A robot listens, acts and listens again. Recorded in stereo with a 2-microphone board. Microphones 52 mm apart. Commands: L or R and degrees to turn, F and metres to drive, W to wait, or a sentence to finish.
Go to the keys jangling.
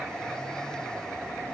W
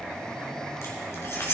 L55
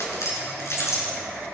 L65
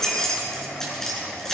L10
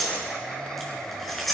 F1.0
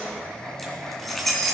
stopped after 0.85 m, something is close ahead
Blocked. The keys jangling is further on, straight ahead.